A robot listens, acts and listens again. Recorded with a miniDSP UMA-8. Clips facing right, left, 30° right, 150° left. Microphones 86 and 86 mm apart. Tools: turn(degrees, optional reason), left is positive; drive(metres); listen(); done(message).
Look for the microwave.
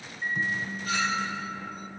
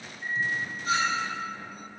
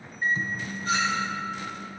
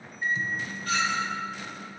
turn(degrees=-75, reason="The microwave: 75° right.")
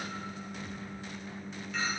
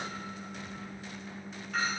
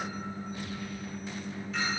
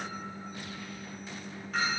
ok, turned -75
done("Facing the microwave.")